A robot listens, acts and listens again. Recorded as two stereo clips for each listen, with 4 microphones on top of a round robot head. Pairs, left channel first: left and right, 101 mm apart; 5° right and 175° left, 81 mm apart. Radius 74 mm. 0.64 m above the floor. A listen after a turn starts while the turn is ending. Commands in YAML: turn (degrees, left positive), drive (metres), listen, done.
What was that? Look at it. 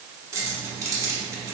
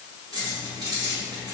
turn: -145
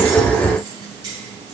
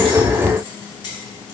listen: true
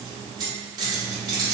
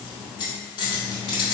turn: -40
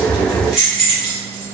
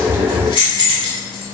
done: "Facing the keys jangling, 1 to 2 m away."